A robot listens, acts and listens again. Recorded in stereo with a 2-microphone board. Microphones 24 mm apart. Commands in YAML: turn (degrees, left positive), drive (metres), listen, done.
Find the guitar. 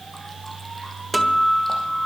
turn: -30
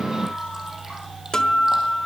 turn: 25
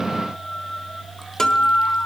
turn: 25
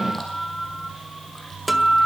done: "Facing the guitar."